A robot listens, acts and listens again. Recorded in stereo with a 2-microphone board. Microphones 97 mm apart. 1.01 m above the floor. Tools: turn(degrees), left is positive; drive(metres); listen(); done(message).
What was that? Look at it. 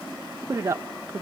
turn(degrees=-30)
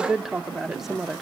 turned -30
done("Found it: a woman speaking, straight ahead.")